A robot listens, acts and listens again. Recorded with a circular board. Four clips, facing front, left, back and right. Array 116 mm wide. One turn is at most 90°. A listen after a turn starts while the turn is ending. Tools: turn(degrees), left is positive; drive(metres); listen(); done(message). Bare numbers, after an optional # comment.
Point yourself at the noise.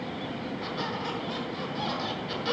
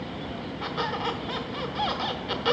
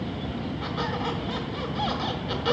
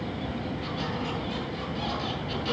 # The squeak: 110° left.
turn(90)
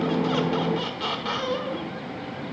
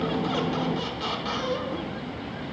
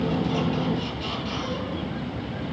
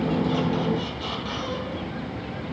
# The squeak is now 20° left.
turn(20)
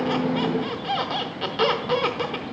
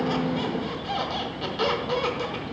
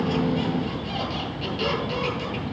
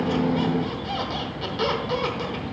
done("Facing the squeak, 1 to 2 m away.")